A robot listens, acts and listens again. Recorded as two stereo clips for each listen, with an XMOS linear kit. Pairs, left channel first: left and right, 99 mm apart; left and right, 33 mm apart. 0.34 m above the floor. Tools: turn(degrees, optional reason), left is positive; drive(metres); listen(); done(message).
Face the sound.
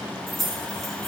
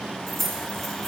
turn(degrees=30)
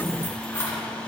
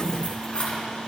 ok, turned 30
turn(degrees=155, reason="So it is at 155° left.")
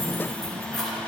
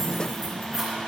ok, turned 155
done("Found it: keys jangling, straight ahead, 2 to 4 m away.")